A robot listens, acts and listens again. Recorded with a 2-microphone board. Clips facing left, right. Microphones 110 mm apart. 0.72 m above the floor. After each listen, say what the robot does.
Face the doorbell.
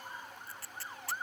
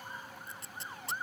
Keep listening.
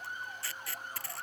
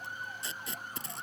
Keep listening.
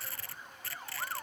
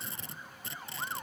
I can't make out a doorbell, only tape being pulled.